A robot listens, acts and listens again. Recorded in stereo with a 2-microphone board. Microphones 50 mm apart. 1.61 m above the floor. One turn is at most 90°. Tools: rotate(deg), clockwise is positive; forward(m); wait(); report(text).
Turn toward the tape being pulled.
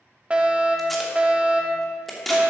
rotate(-30)
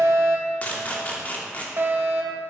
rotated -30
rotate(-90)
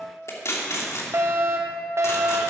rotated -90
rotate(-90)
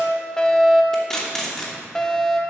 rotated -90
rotate(-10)
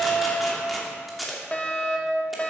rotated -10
report("Found it: tape being pulled, straight ahead.")